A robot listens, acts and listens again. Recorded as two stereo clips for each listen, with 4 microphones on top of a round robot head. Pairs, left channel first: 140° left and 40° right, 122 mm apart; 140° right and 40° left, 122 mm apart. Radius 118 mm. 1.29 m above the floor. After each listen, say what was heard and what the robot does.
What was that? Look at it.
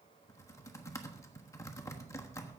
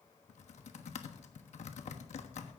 The typing on a keyboard: 155° right. Turn 155° right.
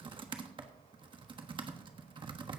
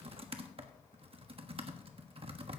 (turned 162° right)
Found it: typing on a keyboard, straight ahead, 1 to 2 m away.